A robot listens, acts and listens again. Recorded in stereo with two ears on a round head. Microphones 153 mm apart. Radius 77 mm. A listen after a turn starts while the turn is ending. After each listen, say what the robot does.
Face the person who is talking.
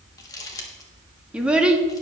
Turn 30° right.
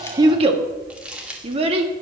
Turn 140° right.
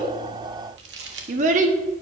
Turn 50° right.
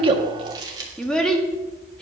Facing the child speaking.